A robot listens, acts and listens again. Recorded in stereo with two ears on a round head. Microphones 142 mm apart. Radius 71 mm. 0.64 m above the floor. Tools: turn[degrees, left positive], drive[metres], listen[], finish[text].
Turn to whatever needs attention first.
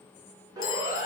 Thought: The siren: about 25° right or 155° right.
Action: turn[-25]
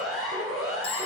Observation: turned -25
Action: finish[Facing the siren.]